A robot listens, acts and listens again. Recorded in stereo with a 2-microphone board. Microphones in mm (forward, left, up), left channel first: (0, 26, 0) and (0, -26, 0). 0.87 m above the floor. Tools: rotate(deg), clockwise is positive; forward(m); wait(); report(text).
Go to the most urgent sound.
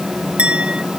wait()
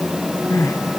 rotate(-90)
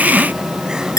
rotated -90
wait()
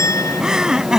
rotate(10)
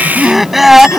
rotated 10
forward(1.0)
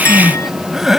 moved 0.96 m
forward(1.0)
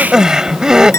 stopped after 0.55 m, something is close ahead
rotate(10)
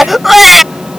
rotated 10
report("Blocked. The crying is further on, straight ahead.")